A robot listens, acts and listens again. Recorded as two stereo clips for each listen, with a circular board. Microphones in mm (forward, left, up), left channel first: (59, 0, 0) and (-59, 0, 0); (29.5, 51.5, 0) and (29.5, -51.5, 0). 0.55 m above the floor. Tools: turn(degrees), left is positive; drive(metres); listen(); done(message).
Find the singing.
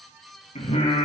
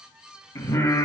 turn(degrees=25)
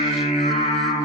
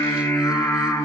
turn(degrees=15)
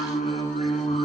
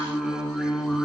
done("Found it: singing, straight ahead.")